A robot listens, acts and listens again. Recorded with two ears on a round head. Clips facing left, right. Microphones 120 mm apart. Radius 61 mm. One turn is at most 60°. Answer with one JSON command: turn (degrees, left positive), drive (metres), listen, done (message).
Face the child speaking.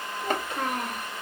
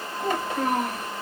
{"turn": -60}
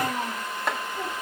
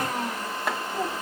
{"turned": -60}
{"turn": -50}
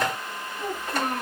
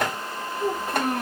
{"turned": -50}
{"turn": -10}
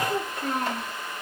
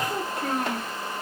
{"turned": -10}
{"done": "Found it: a child speaking, straight ahead, 2 to 4 m away."}